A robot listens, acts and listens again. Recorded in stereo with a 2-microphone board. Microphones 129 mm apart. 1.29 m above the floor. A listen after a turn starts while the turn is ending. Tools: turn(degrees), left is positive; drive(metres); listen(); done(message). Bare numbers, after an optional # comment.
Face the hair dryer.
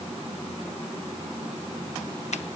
listen()
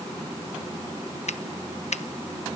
listen()
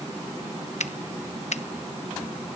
done("I can't make out a hair dryer, only a finger snap.")